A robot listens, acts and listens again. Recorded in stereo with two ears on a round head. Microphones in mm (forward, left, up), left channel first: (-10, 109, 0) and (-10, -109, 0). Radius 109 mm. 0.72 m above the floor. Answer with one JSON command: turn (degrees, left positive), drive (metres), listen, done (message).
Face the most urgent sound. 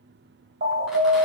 {"turn": -45}
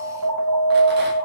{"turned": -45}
{"turn": -90}
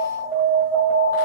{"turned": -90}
{"turn": -15}
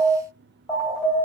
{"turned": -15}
{"done": "Facing the alarm."}